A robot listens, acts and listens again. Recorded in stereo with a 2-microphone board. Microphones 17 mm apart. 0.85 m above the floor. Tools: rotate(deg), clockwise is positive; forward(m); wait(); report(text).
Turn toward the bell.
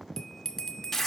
rotate(-25)
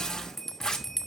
report("Facing the bell, 1 to 2 m away.")